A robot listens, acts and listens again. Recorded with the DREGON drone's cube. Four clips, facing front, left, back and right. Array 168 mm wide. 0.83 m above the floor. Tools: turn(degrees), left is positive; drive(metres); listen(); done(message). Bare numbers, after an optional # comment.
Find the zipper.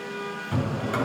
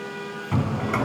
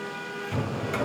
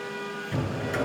listen()
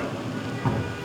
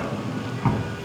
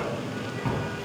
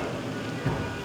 listen()
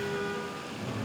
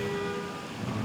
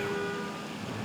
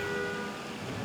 done("I can't make out a zipper to turn to.")